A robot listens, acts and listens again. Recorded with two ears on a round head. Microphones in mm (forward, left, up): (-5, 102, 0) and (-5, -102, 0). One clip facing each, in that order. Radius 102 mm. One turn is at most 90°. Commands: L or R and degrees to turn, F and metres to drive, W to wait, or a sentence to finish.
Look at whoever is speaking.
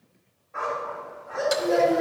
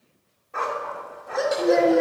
R35
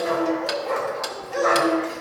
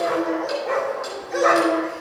R90
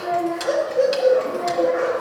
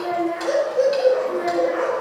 R75
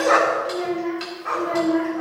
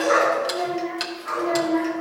L20
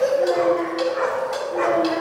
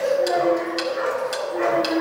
Found it: a child speaking, straight ahead, 2 to 4 m away.